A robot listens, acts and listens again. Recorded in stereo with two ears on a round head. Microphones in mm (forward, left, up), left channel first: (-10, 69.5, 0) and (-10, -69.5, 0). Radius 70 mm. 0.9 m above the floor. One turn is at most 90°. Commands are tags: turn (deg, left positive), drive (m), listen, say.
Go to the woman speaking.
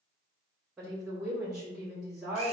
<turn deg="-30"/>
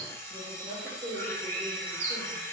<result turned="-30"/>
<turn deg="-90"/>
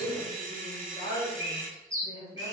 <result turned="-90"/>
<turn deg="-80"/>
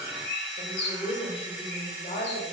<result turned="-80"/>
<turn deg="35"/>
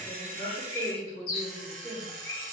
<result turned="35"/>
<drive m="1.0"/>
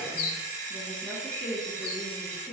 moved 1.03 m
<drive m="1.0"/>
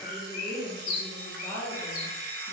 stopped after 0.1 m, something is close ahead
<turn deg="10"/>
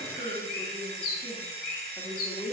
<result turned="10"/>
<say>I am next to the woman speaking.</say>